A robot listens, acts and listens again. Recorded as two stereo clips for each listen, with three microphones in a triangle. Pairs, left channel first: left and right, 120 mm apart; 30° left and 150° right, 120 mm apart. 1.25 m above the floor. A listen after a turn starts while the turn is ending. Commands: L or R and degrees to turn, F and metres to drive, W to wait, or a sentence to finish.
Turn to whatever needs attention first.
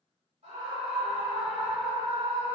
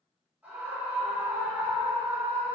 R75
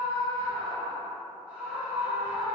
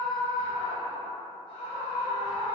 R10
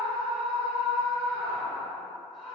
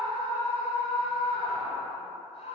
Found it: a scream, straight ahead.